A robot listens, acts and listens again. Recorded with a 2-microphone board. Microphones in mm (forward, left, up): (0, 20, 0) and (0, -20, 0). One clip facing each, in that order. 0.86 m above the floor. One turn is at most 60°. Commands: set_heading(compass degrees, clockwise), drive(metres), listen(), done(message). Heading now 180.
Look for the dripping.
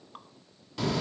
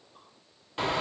set_heading(120)
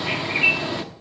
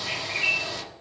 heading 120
listen()
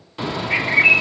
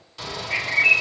listen()
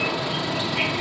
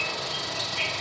done("I heard dripping, but can't make it out now. It was about 10° left or 50° left.")